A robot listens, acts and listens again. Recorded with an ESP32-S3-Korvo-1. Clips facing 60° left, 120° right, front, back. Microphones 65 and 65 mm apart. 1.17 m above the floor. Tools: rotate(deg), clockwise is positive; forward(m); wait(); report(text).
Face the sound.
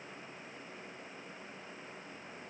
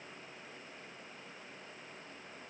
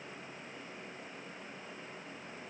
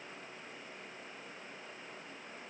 wait()
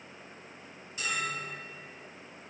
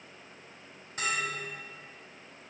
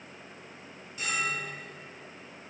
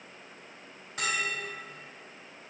rotate(160)
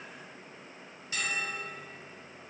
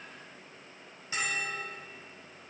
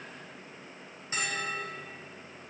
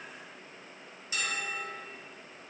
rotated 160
rotate(55)
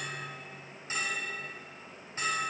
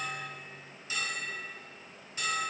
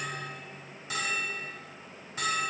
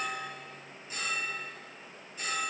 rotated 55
report("Facing the bell.")